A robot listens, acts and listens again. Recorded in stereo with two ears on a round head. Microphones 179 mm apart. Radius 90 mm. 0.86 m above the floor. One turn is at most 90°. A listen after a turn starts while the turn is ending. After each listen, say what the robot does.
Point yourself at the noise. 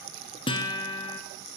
Turn 25° left.
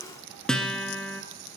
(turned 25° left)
Found it: a guitar, straight ahead, 1 to 2 m away.